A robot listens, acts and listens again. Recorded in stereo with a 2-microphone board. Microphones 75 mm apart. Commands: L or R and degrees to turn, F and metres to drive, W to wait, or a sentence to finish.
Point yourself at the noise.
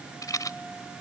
L60
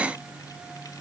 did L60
W
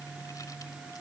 W
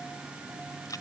L60
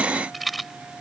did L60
Facing the rattle.